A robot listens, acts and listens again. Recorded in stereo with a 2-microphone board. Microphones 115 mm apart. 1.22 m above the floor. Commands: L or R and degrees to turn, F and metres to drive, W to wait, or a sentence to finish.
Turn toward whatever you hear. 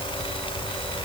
W
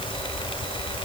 W
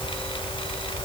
I can't make out anything to turn to.